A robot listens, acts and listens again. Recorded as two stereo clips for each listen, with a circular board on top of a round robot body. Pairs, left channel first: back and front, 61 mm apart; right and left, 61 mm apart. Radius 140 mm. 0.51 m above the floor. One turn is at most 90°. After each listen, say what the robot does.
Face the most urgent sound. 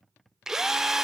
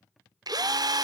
Keep listening.
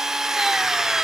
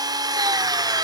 Keep listening.
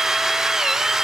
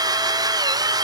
I can't make out anything urgent, only a drill.